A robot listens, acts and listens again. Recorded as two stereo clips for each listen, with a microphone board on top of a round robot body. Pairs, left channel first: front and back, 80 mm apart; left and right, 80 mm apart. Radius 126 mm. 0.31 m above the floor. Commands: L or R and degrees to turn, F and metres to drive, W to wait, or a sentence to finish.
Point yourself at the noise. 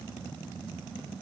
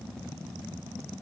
W
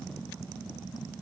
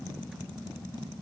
W
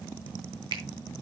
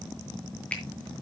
L165
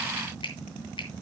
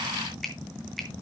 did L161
Found it: a finger snap, straight ahead.